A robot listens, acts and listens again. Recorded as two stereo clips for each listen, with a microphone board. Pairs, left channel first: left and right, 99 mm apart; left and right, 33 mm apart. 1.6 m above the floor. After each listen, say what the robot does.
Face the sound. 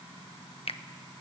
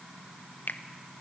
Turn 70° left.
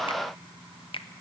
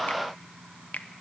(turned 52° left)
Turn 60° left.
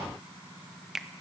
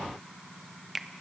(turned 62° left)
Found it: a finger snap, straight ahead, 1 to 2 m away.